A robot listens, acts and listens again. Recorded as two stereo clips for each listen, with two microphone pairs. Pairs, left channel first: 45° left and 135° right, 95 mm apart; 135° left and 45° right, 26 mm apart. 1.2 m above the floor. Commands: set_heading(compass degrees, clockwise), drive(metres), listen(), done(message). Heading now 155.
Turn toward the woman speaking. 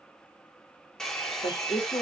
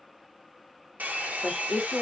set_heading(115)
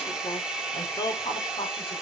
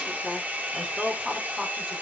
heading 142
set_heading(127)
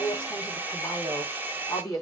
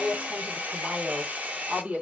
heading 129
set_heading(139)
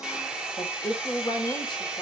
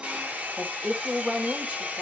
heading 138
done("Found it: a woman speaking, straight ahead, over 4 m away.")